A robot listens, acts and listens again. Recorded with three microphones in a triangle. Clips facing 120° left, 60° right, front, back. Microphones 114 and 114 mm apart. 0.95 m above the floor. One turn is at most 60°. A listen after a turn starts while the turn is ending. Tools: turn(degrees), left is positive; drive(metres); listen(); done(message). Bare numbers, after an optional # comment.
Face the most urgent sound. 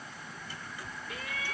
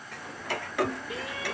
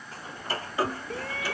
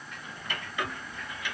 done("Found it: a shout, straight ahead.")